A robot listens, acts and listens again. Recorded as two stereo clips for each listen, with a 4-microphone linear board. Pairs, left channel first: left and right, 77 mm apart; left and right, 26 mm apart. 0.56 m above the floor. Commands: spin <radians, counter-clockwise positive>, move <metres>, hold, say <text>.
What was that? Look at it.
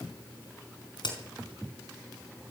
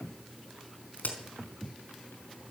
spin 1.22
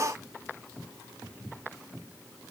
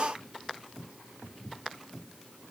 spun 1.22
hold
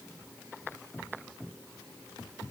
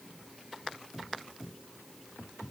say I heard a crack, but can't make it out now. It was about straight ahead or 40° left.